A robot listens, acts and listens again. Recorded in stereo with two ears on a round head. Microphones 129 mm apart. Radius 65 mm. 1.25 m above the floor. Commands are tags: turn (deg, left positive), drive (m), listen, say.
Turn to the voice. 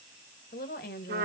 <turn deg="70"/>
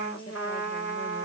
<listen/>
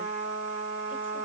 <listen/>
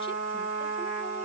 <say>I heard a woman speaking, but can't make it out now. It was about straight ahead or 40° left.</say>